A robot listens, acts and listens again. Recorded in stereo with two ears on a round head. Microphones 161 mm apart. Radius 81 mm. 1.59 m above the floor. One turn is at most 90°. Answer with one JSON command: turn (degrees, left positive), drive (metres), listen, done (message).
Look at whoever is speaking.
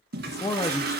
{"turn": 20}
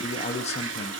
{"turn": 90}
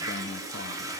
{"turn": 50}
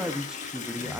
{"done": "Found it: a man speaking, straight ahead."}